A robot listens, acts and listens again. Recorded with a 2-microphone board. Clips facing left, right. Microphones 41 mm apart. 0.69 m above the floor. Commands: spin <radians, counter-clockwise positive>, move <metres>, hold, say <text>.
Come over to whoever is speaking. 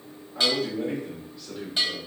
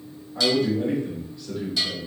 spin -0.52
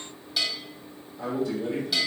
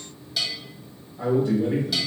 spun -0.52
spin -2.53
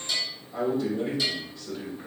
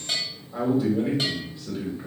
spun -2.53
spin -0.26
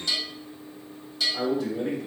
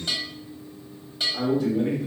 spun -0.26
move 1.0
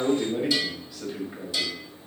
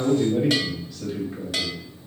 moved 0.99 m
spin 0.35
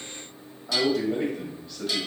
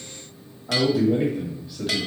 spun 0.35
spin -0.17
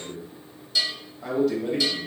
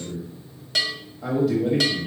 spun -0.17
move 1.0
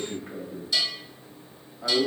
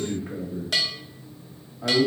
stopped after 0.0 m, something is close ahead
say I am next to the man speaking.